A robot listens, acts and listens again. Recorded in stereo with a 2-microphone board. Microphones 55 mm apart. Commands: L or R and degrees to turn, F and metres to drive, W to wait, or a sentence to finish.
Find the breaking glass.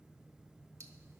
W
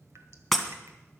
L30
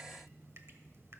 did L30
W
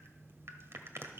I heard breaking glass, but can't make it out now. It was about 25° right or 145° left.